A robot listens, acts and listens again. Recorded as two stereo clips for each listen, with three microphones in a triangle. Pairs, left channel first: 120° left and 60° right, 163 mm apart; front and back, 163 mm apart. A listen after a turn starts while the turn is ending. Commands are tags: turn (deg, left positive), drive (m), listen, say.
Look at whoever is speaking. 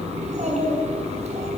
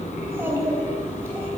<turn deg="-105"/>
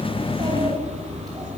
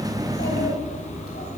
<listen/>
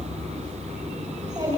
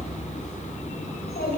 <say>Found it: a child speaking, straight ahead.</say>